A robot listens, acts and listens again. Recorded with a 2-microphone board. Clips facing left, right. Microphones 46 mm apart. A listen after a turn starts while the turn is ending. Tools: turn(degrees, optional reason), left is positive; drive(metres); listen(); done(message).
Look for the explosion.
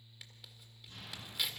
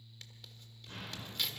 turn(degrees=-90)
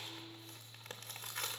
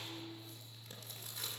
done("I heard an explosion from this way, but can't make it out now.")